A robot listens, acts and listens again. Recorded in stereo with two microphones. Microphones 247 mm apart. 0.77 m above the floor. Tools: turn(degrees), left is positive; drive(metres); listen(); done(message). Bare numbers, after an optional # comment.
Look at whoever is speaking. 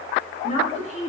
# The woman speaking: about 25° left or 155° left.
turn(25)
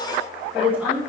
# So it is at 10° right.
turn(-10)
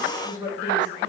# The woman speaking is now 20° right.
turn(-20)
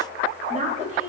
# The woman speaking is now 30° right.
turn(-30)
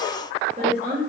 # The woman speaking is now 35° right.
turn(-35)
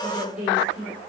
done("Facing the woman speaking, 1 to 2 m away.")